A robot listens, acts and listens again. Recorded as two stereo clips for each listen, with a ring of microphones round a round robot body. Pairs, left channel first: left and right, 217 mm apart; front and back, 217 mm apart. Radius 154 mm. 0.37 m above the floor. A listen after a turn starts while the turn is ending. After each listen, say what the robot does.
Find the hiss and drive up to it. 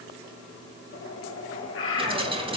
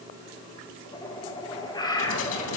Turn 25° right.
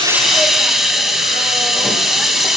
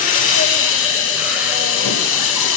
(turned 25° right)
Drive 1.0 m forward.
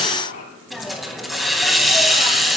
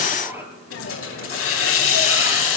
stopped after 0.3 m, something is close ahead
Something is in my way. I am facing the hiss but have not reached it.